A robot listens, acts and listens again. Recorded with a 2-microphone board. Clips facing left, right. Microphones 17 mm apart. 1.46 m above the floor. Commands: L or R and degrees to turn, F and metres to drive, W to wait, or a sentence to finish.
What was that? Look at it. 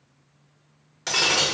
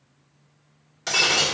L30
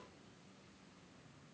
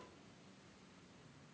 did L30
W
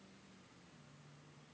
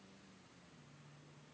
I heard breaking glass, but can't make it out now. It was about 25° right or 145° left.